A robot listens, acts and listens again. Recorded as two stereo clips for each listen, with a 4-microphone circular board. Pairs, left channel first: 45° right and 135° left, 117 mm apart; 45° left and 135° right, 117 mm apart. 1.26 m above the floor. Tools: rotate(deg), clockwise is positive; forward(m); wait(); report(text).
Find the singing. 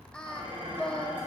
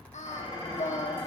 rotate(-40)
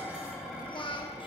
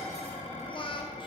report("Facing the singing, 1 to 2 m away.")